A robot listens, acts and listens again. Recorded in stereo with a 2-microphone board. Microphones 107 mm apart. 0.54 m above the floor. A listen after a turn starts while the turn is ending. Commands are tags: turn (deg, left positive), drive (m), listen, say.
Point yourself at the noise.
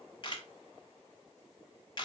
<turn deg="45"/>
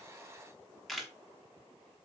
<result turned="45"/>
<say>Found it: a camera shutter, straight ahead.</say>